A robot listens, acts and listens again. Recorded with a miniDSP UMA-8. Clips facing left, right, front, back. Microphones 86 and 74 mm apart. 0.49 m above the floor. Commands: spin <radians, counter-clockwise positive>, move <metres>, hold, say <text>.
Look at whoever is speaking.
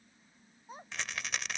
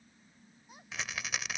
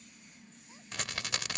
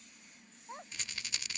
spin 2.53
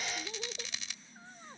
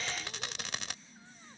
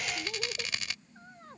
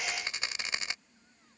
hold
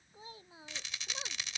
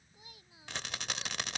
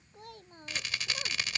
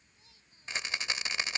spin 0.52
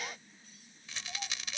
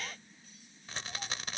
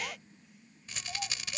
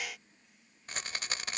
hold
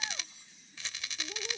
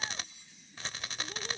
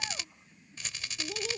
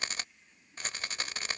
hold
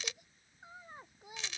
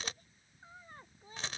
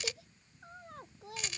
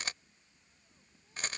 spin 0.17
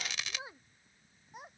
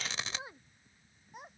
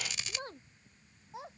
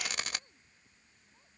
say Facing the child speaking.